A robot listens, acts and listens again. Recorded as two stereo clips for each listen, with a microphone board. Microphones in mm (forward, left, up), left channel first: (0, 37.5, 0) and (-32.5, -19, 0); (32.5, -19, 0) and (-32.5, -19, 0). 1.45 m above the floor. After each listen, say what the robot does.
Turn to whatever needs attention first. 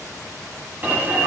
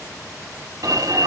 Turn 180° left.
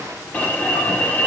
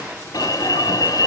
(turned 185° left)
Facing the alarm, 2 to 4 m away.